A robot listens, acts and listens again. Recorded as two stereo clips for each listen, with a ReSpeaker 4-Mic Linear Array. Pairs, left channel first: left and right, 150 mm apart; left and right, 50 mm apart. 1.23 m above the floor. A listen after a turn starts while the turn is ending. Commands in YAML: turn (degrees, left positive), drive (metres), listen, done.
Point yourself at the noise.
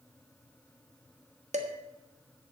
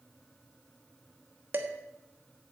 turn: -50
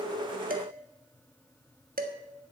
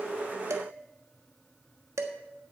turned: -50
turn: -80
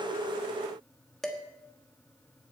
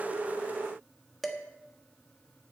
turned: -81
done: "Facing the dishes clattering, 1 to 2 m away."